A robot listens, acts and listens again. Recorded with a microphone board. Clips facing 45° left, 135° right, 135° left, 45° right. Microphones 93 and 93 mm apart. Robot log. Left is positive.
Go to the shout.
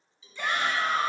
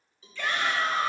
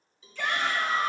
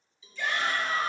note: The shout: 115° left.
cmd yaw +115
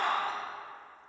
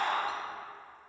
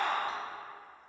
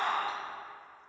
note: The shout is now 20° left.
cmd yaw +20
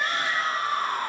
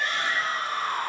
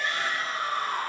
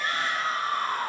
cmd fwd 1.0
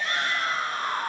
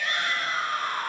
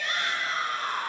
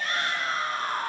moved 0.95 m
cmd fwd 1.0
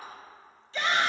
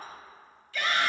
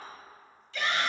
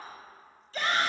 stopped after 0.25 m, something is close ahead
note: The shout is now 10° right.
cmd yaw -10
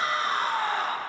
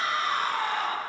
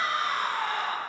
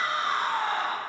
end: I am next to the shout.